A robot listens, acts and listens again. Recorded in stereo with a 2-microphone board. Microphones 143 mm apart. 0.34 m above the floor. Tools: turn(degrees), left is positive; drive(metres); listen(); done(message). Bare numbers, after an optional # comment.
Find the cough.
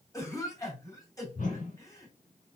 # The cough: about 25° left or 155° left.
turn(25)
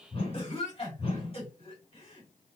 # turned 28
# So it is at 125° left.
turn(125)
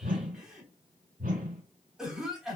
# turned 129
done("Found it: a cough, straight ahead, 2 to 4 m away.")